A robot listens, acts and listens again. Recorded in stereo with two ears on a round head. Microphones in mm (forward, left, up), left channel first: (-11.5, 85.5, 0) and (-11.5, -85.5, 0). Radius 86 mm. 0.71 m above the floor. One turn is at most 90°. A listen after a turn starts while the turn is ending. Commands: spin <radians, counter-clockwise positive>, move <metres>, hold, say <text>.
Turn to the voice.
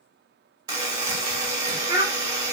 spin -0.44
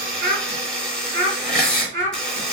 spin -1.57
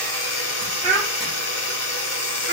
spin -0.70
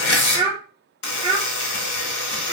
spin -0.44
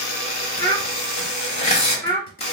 spin 0.26
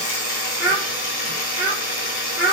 say Facing the child speaking.